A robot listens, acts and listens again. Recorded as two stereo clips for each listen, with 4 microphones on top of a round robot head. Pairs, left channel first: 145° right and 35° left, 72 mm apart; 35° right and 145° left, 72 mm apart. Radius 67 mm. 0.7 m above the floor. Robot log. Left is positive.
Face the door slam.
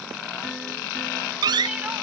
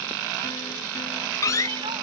note: The door slam: 10° left.
cmd yaw +10
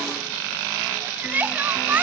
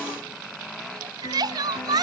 end: Facing where the door slam came from. I can't hear it now.